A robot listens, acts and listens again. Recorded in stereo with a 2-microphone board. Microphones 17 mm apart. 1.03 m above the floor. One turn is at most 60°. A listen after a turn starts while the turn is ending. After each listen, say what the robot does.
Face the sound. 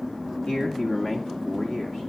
Turn 40° left.
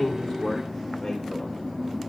Keep listening.
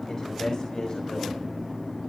Turn 60° left.
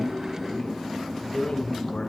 Turn 60° left.
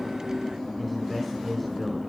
Facing the man speaking, over 4 m away.